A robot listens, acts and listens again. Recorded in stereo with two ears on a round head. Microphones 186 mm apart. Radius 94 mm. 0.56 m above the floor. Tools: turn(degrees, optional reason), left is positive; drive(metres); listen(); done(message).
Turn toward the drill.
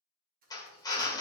turn(degrees=20, reason="The drill: about 20° left or 160° left.")
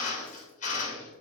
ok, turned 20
turn(degrees=135, reason="So it is at 135° left.")
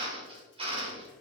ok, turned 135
turn(degrees=-30, reason="The drill is now 30° right.")
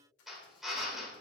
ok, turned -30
done("Facing the drill.")